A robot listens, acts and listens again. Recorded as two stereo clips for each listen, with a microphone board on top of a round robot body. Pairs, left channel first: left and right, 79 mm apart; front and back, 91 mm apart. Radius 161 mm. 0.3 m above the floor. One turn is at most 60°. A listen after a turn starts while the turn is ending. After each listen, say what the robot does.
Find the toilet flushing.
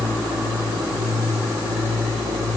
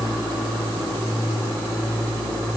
Keep listening.
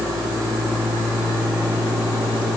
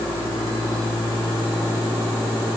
Keep listening.
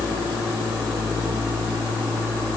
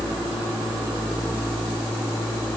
I can't make out a toilet flushing.